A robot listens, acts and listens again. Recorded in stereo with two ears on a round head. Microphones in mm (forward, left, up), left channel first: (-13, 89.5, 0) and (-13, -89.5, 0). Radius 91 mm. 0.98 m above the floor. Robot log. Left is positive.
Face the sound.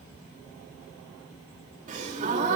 note: The gasp: about 40° right or 140° right.
cmd yaw -40
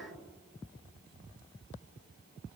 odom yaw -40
cmd idle
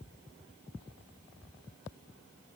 end: I heard a gasp, but can't make it out now. It was about straight ahead or 100° right.